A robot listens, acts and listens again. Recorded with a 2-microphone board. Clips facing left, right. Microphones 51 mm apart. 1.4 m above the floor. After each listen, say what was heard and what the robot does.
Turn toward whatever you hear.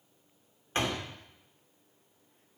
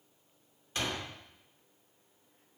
The door slam: about 40° left or 140° left. Turn 40° left.
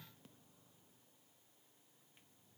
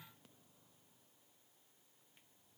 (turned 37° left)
Keep listening.
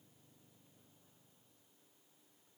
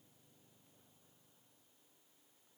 I heard a door slam, but can't make it out now. It was about straight ahead or 105° left.